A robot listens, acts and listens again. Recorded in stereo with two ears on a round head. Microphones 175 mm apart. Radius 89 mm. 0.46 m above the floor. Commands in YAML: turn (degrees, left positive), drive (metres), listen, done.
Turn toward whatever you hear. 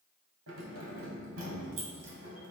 turn: -75
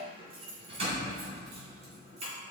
turn: -35
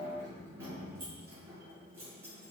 turn: -15
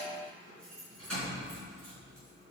done: "Facing the keys jangling."